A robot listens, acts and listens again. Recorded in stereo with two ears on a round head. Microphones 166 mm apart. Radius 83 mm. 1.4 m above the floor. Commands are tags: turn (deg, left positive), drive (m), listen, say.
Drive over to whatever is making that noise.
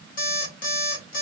<turn deg="50"/>
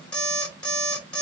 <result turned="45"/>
<drive m="1.0"/>
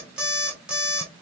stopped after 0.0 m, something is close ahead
<say>Something is in my way. I am facing the alarm clock but have not reached it.</say>